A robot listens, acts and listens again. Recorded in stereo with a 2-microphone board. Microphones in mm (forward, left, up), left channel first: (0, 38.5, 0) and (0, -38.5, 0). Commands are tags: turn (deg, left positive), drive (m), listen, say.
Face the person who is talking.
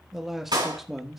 <turn deg="-30"/>
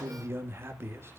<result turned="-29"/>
<turn deg="-145"/>
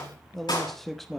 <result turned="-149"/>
<say>Facing the man speaking.</say>